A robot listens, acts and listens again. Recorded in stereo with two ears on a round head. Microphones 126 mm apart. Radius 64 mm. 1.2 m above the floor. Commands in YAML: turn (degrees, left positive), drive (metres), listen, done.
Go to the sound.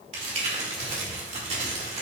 turn: -50
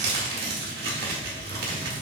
turn: -75
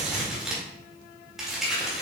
drive: 1.0
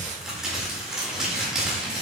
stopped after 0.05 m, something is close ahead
done: "Blocked. The crumpling is further on, straight ahead."